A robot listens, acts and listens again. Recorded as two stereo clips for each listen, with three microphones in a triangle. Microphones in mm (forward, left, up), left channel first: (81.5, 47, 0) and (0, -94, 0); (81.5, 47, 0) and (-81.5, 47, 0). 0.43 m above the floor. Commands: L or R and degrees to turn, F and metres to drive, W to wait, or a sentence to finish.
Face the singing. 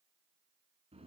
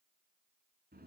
W
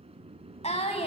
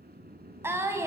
L110
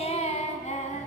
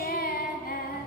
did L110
L20
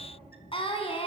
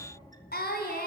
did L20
Found it: singing, straight ahead.